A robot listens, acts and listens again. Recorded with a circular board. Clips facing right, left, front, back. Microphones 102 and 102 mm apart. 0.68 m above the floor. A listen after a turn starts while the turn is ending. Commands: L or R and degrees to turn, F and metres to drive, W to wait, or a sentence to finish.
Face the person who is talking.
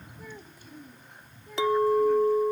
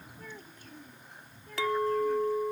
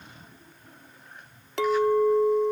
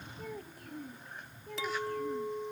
R170
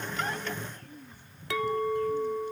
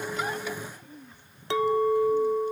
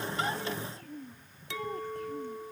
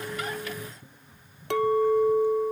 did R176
L10
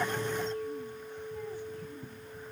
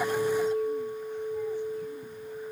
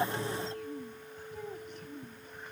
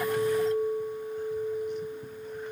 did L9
W
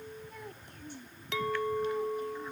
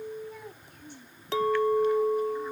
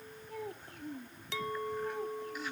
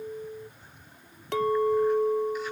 Facing the child speaking.